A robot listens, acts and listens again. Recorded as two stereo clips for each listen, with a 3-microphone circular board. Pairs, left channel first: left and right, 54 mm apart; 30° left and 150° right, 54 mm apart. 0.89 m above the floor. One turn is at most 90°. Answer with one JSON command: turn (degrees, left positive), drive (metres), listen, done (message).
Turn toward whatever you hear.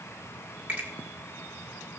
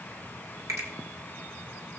{"turn": -90}
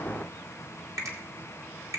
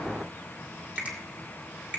{"turn": -85}
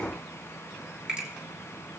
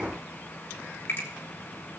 {"turn": -20}
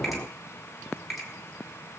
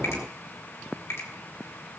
{"done": "Found it: a finger snap, straight ahead, 2 to 4 m away."}